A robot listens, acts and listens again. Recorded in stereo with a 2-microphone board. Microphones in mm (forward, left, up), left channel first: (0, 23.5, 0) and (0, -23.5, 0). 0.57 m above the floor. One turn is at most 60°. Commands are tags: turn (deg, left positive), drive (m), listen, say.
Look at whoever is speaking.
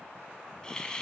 <listen/>
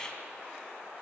<listen/>
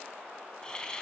<say>I can't make out anyone speaking, only a hiss.</say>